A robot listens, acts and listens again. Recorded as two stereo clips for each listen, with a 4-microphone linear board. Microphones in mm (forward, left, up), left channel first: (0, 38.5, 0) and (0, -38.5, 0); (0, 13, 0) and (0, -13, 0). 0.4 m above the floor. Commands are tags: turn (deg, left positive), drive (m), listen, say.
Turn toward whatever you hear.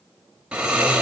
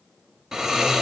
<turn deg="-30"/>
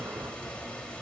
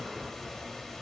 <turn deg="15"/>
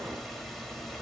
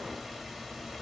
<say>Facing the snoring.</say>